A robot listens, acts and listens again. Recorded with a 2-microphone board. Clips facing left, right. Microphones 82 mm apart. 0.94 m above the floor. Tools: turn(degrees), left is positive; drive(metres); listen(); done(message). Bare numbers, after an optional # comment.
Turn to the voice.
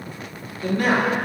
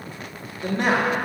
# The man speaking: about 25° right or 155° right.
turn(-25)
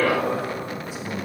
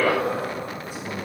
# So it is at 125° right.
turn(-125)
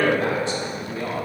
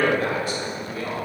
# The man speaking is now 30° left.
turn(30)
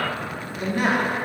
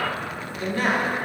# The man speaking is now 15° left.
turn(15)
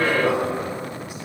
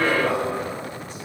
# The man speaking is now 10° left.
turn(10)
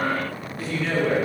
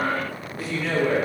done("Found it: a man speaking, straight ahead, 1 to 2 m away.")